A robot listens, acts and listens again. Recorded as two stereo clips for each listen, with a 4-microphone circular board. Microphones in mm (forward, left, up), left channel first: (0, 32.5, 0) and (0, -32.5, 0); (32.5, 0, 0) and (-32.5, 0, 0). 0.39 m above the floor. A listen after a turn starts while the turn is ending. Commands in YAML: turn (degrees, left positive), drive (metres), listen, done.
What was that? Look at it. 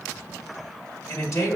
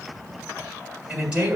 turn: 110
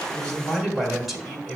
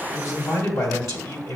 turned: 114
done: "Found it: a man speaking, straight ahead, 2 to 4 m away."